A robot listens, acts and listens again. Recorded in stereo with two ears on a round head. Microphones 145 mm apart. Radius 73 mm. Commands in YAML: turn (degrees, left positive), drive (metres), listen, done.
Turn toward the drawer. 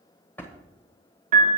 turn: 30
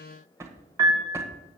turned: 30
turn: -20
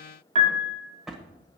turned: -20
done: "Facing the drawer."